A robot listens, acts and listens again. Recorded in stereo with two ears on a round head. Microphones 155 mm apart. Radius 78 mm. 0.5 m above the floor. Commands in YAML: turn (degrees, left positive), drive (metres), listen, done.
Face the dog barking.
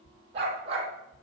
turn: -35
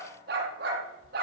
turn: -120
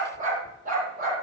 turn: -50
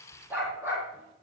turn: -15
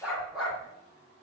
done: "Facing the dog barking."